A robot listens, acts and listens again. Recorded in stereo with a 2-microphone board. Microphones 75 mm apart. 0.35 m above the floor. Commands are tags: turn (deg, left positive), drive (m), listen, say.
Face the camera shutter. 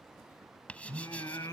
<listen/>
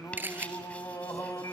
<turn deg="-25"/>
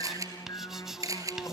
<turn deg="-130"/>
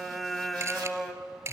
<turn deg="-40"/>
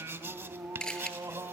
<turn deg="10"/>
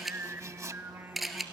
<say>Facing the camera shutter, 1 to 2 m away.</say>